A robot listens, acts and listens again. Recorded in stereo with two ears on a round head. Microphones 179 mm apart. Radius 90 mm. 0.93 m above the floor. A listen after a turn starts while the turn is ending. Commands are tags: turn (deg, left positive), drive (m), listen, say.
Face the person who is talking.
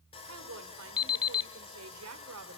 <turn deg="-90"/>
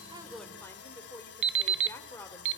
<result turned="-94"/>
<turn deg="10"/>
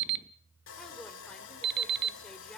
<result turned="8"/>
<say>Found it: a woman speaking, straight ahead.</say>